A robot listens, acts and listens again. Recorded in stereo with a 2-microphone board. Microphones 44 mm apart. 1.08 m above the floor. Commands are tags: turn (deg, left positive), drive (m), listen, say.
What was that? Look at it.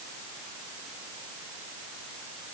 <listen/>
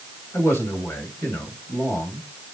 <turn deg="70"/>
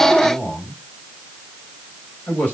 <turn deg="35"/>
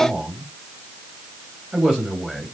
<turn deg="-15"/>
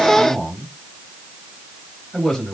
<say>Found it: a man speaking, straight ahead, over 4 m away.</say>